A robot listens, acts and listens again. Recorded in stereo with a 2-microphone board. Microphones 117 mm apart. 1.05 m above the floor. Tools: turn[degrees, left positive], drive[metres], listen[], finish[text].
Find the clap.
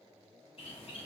Action: listen[]
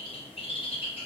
Action: listen[]
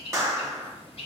Thought: The clap: about 25° right or 155° right.
Action: turn[-25]
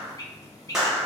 Action: finish[Facing the clap.]